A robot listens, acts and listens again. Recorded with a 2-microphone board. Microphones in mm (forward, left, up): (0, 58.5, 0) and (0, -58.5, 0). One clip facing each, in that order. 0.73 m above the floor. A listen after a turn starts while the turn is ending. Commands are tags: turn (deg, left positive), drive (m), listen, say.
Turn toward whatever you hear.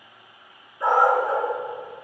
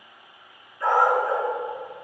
<turn deg="20"/>
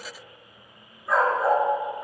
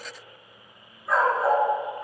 <say>Facing the dog barking.</say>